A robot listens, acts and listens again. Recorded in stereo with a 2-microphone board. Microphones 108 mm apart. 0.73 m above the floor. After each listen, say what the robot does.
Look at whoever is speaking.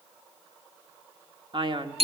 Turn 50° right.
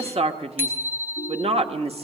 Turn 80° right.
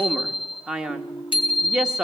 Turn 10° right.
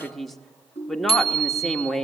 Found it: a man speaking, straight ahead.